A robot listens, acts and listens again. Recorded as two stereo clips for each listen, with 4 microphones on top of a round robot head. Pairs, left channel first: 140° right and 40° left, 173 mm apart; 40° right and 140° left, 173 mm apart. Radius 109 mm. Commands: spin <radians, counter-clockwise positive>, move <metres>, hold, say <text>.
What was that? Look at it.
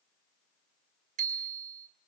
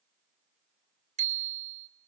spin 1.48
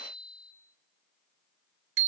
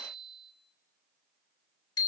spin 0.44
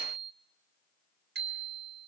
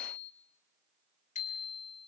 spin 0.17
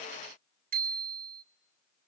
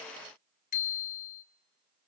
say Facing the bicycle bell, 2 to 4 m away.